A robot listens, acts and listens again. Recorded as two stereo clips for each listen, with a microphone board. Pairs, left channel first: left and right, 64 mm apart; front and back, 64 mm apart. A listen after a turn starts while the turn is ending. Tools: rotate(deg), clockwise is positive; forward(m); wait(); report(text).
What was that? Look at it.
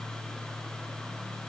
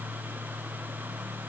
wait()
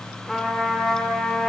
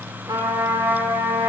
rotate(-175)
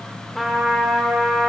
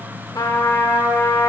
report("Found it: a trumpet, straight ahead, under 1 m away.")